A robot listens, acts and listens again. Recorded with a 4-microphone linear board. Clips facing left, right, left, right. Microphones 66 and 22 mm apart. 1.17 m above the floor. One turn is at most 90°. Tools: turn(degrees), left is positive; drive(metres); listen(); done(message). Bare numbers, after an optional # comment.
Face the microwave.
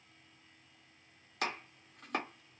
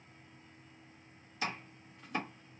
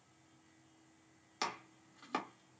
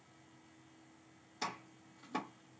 listen()
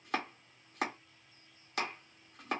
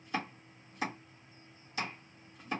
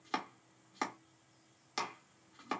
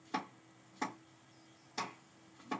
listen()
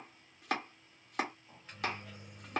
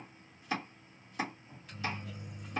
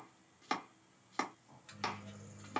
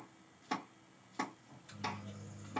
# The microwave: about 30° left or 150° left.
turn(30)
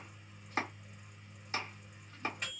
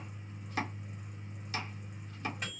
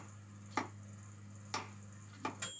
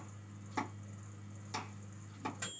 done("Found it: a microwave, straight ahead, 1 to 2 m away.")